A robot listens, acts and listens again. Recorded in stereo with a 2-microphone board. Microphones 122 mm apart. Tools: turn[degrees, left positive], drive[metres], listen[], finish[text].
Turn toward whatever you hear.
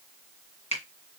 Thought: The finger snap: about 70° left or 110° left.
Action: turn[70]
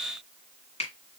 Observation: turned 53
Thought: So it is at 60° left.
Action: turn[60]
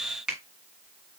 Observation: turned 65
Action: finish[Facing the finger snap.]